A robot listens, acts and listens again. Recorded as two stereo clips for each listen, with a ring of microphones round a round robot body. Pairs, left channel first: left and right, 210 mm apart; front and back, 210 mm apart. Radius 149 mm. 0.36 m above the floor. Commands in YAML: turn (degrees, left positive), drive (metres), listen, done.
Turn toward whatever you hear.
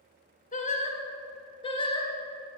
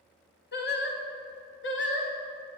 turn: 25
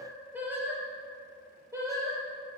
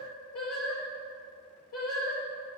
turn: -15
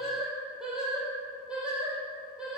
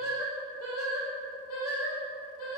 done: "Found it: singing, straight ahead."